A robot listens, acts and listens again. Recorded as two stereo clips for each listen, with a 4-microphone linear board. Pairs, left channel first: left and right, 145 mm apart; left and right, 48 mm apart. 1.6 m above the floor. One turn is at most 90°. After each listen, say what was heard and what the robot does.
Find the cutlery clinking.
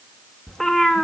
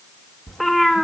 Keep listening.
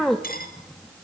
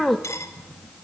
The cutlery clinking: about 70° left or 110° left. Turn 70° left.
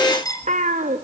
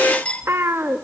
So it is at 25° left. Turn 25° left.
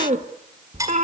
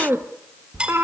The cutlery clinking is now 25° right. Turn 25° right.
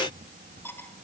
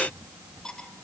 The cutlery clinking is now 15° left. Turn 15° left.
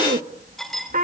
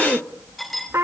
Found it: cutlery clinking, straight ahead.